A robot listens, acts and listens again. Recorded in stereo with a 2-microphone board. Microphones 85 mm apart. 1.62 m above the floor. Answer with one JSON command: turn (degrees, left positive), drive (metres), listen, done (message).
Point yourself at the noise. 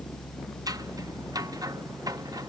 {"turn": -45}
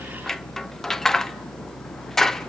{"done": "Found it: scissors, straight ahead, under 1 m away."}